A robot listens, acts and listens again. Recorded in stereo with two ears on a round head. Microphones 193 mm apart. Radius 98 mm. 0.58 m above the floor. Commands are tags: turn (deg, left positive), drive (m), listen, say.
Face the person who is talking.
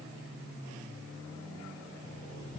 <listen/>
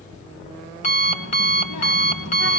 <turn deg="90"/>
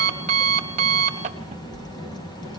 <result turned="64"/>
<turn deg="20"/>
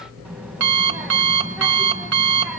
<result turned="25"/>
<say>Found it: a child speaking, straight ahead.</say>